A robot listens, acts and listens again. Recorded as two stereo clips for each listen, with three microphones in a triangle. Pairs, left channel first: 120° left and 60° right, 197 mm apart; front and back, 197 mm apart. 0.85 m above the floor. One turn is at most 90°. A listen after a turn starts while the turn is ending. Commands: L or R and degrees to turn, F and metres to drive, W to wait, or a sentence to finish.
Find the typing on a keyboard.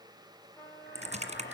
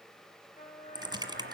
R90
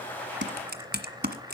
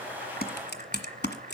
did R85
R30
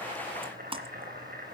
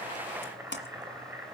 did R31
Facing the typing on a keyboard.